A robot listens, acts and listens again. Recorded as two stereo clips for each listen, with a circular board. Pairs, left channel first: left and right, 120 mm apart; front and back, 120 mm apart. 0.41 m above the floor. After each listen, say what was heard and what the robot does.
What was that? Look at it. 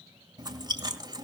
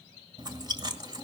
The chewing: 135° right. Turn 135° right.
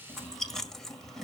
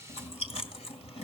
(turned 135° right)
Found it: chewing, straight ahead, 2 to 4 m away.